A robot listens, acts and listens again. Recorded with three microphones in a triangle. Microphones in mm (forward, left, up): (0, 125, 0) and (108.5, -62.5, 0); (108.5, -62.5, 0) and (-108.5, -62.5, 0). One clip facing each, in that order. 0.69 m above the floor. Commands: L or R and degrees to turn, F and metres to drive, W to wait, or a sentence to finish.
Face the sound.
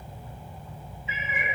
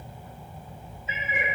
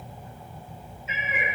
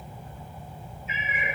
R10
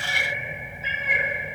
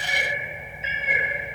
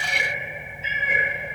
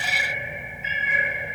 Found it: a cat meowing, straight ahead.